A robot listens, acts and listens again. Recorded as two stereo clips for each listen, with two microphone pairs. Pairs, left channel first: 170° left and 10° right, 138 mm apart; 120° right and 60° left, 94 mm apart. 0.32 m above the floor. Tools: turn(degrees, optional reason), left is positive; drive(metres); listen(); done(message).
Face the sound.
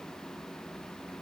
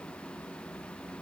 listen()
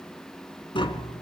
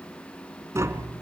turn(degrees=120, reason="The tapping: 120° left.")
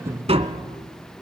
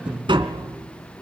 turn(degrees=35, reason="The tapping is now 35° left.")
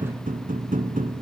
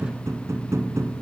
done("Facing the tapping.")